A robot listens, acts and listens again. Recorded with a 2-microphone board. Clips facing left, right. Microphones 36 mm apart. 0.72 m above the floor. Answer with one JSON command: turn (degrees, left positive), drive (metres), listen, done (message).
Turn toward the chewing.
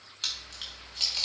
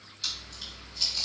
{"turn": 55}
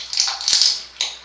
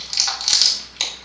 {"done": "Found it: chewing, straight ahead."}